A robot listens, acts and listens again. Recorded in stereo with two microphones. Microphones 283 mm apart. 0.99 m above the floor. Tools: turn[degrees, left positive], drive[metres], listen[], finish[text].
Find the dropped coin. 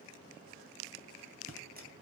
Thought: The dropped coin: about 30° right or 150° right.
Action: turn[-30]
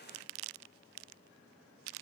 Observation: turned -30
Action: listen[]
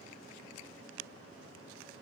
Action: finish[I heard a dropped coin, but can't make it out now. It was about straight ahead or 120° right.]